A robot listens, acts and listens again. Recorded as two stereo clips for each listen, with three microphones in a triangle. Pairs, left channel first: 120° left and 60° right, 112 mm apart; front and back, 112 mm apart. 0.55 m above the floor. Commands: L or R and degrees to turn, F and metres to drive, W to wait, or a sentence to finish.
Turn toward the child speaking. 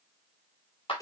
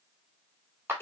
W
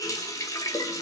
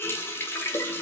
W
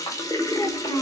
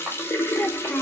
L85
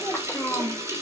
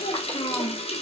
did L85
L50
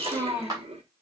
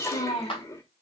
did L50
L10
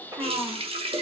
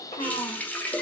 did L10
Facing the child speaking, 2 to 4 m away.